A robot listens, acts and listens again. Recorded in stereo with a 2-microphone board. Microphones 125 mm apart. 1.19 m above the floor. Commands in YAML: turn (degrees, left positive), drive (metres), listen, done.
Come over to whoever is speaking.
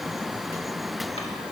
listen: true
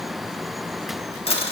listen: true
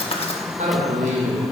turn: -70
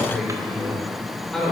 drive: 1.0
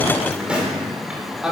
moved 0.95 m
drive: 1.0
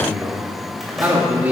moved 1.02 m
turn: -15
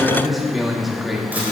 drive: 1.0
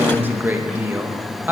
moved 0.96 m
turn: -15
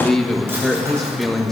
drive: 1.0
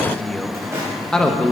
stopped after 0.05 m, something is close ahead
done: "I am next to the man speaking."